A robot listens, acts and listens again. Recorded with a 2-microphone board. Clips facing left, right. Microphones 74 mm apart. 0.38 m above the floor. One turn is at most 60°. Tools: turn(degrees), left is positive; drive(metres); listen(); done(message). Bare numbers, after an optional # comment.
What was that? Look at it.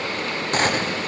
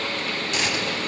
# The gunshot: about 40° left or 140° left.
turn(40)
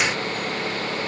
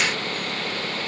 listen()
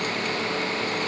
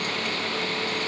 done("I heard a gunshot, but can't make it out now. It was about straight ahead or 100° left.")